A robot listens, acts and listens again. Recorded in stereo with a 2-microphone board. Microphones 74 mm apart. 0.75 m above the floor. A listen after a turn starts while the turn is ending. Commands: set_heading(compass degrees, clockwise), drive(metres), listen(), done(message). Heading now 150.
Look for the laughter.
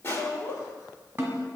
set_heading(95)
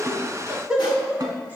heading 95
set_heading(110)
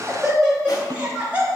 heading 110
set_heading(130)
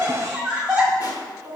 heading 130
set_heading(150)
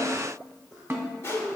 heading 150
done("Facing the laughter.")